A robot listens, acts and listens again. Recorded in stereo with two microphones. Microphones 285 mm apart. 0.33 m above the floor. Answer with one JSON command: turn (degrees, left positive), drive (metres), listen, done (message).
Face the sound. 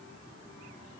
{"listen": true}
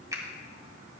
{"turn": -30}
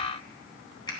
{"turn": 15}
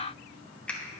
{"done": "Facing the finger snap."}